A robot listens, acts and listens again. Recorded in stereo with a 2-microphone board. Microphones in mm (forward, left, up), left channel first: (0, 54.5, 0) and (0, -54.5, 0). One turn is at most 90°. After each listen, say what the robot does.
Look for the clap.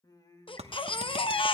Turn 65° right.
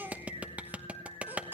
Turn 15° right.
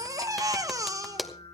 Facing the clap, 1 to 2 m away.